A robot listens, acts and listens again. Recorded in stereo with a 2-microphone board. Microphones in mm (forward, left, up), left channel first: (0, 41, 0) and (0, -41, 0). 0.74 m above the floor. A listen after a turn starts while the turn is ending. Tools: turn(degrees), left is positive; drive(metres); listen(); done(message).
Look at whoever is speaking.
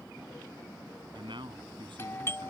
turn(degrees=-90)
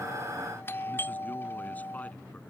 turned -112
turn(degrees=20)
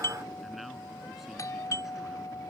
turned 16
listen()
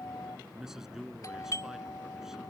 done("Facing the man speaking.")